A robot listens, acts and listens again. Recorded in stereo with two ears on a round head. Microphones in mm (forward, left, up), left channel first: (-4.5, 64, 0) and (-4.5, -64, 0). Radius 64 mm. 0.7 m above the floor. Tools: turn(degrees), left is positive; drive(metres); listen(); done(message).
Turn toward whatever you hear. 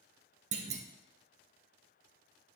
turn(degrees=-50)
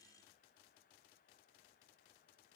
listen()
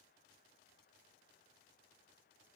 done("I heard a clunk, but can't make it out now. It was about straight ahead or 80° right.")